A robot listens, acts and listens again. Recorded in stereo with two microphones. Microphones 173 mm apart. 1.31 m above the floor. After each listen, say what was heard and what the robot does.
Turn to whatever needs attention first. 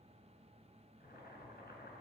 Keep listening.
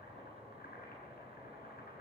Keep listening.
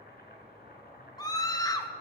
The scream: about 20° left or 160° left. Turn 20° left.
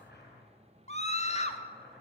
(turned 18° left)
So it is at 140° left. Turn 140° left.
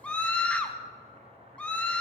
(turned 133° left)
Facing the scream, 1 to 2 m away.